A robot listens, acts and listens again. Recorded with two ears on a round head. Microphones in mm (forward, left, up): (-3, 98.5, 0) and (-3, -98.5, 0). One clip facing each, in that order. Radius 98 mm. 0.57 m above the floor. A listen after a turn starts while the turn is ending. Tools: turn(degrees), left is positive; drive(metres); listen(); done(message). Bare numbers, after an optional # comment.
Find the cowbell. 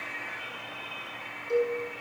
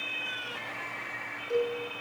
turn(30)
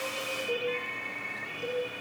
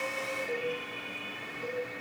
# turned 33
listen()
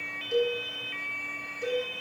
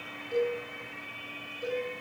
# So it is at 140° left.
turn(140)
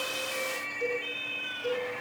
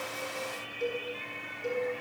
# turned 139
listen()
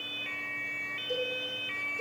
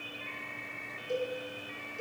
listen()
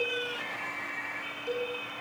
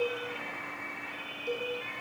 done("Facing the cowbell.")